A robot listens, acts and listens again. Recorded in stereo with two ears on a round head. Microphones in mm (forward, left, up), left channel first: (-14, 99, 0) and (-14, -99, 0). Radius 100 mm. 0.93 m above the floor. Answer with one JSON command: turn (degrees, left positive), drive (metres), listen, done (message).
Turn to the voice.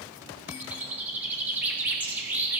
{"listen": true}
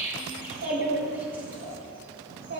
{"turn": -50}
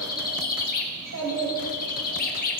{"turn": -80}
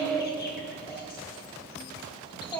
{"turn": 10}
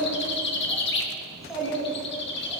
{"done": "Found it: a child speaking, straight ahead, 2 to 4 m away."}